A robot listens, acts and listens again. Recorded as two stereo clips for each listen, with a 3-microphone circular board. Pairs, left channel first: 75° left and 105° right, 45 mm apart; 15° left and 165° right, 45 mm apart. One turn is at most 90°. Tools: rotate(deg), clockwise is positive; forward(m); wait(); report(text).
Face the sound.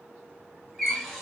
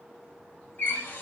rotate(15)
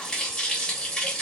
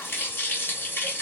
report("Facing the running tap, under 1 m away.")